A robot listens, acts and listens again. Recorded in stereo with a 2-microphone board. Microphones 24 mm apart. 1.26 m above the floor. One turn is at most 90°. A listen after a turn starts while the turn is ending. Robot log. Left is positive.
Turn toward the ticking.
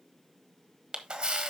cmd idle
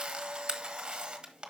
cmd idle
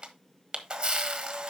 end: I can't make out ticking, only a camera shutter.